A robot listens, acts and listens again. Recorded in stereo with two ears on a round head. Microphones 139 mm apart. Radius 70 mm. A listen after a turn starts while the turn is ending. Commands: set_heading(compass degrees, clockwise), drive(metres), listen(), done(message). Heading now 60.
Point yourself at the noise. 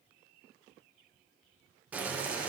set_heading(90)
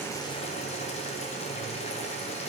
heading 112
set_heading(67)
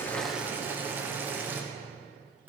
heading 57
set_heading(72)
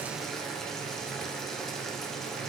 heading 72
done("Found it: boiling, straight ahead, 1 to 2 m away.")